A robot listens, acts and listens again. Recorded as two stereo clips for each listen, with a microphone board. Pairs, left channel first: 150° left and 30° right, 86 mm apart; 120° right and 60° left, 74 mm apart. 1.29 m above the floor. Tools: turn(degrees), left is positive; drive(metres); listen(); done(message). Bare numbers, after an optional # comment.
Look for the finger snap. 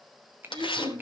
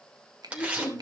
# The finger snap: 35° left.
turn(35)
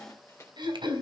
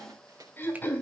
listen()
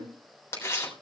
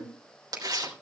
listen()
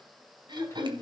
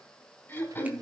done("Facing where the finger snap came from. I can't hear it now.")